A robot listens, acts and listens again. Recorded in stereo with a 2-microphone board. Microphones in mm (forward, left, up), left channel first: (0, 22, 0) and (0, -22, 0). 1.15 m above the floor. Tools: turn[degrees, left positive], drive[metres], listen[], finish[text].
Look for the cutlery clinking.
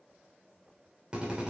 Action: listen[]
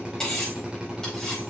Thought: The cutlery clinking: about 15° left or 165° left.
Action: turn[15]
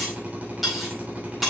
Action: finish[Facing the cutlery clinking, over 4 m away.]